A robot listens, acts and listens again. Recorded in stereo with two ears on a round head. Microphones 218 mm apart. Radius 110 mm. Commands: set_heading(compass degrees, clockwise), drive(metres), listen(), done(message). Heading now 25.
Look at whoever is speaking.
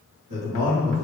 set_heading(75)
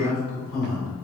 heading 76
done("Facing the man speaking, 1 to 2 m away.")